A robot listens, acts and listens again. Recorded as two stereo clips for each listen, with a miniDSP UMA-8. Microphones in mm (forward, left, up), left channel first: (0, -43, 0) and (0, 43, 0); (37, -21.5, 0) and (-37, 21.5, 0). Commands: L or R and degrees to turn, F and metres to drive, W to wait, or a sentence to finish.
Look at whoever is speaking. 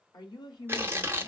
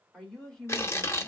R115
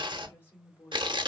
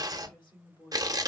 R30
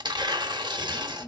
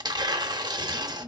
R25
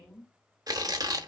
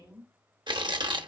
R10
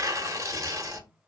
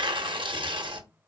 W
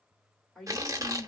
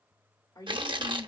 Found it: a woman speaking, straight ahead, 2 to 4 m away.